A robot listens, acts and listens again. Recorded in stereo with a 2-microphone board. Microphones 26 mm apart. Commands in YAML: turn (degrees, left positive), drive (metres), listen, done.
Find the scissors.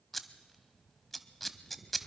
turn: 30
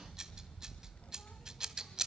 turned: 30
turn: -25
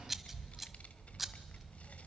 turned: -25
turn: -10
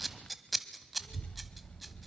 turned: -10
done: "Found it: scissors, straight ahead."